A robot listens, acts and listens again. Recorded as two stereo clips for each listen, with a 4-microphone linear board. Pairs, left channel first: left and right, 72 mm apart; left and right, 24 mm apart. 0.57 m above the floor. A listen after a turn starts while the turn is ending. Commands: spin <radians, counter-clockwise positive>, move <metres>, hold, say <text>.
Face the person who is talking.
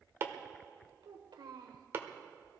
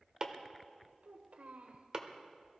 spin -1.57
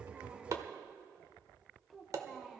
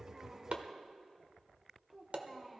say Facing the child speaking, 1 to 2 m away.